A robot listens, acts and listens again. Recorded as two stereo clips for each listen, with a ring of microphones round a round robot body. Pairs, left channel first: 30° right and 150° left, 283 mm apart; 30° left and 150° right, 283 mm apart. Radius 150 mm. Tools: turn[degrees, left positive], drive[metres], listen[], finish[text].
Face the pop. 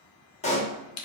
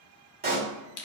Thought: The pop: 95° right.
Action: turn[-95]
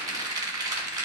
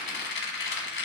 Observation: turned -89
Action: finish[Facing where the pop came from. I can't hear it now.]